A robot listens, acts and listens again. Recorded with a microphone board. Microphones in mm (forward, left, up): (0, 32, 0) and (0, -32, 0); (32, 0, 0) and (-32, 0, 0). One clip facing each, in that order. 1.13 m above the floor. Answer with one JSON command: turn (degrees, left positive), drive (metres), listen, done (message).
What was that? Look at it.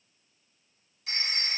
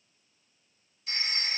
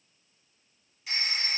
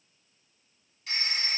{"turn": 85}
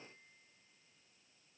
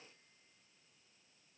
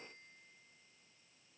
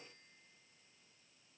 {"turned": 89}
{"listen": true}
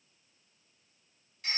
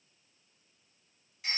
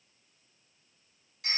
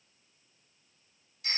{"done": "Found it: a phone ringing, straight ahead."}